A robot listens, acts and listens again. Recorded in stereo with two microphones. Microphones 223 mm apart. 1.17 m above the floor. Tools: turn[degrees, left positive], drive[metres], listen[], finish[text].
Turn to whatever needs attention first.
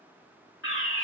Thought: The fire alarm: about 65° left or 115° left.
Action: turn[65]
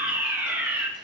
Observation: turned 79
Thought: So it is at 10° right.
Action: turn[-10]
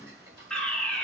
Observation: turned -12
Action: finish[Facing the fire alarm.]